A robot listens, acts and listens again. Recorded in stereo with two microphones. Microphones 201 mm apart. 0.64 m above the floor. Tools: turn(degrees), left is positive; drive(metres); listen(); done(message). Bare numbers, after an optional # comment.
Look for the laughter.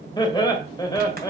# The laughter: about 20° left or 160° left.
turn(20)
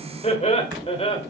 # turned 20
# The laughter: about 30° left or 150° left.
turn(30)
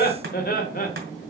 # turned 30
# So it is at 135° left.
turn(135)
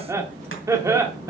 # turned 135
# The laughter is now 15° right.
turn(-15)
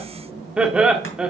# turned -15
done("Facing the laughter, 1 to 2 m away.")